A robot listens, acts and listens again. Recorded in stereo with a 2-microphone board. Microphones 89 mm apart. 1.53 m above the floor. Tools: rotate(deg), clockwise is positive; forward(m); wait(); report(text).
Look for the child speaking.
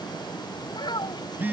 rotate(-55)
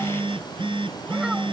wait()
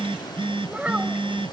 rotate(15)
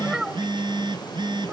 rotate(10)
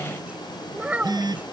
rotate(15)
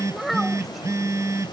report("Facing the child speaking.")